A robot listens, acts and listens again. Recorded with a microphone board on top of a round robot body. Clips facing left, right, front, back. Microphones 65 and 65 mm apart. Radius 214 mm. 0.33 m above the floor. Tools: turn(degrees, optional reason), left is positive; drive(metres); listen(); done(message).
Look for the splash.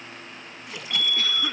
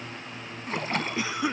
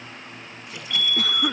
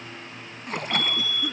turn(degrees=-140, reason="The splash: 140° right.")
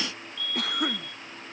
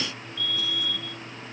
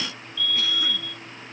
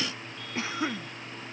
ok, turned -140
done("I heard a splash from this way, but can't make it out now.")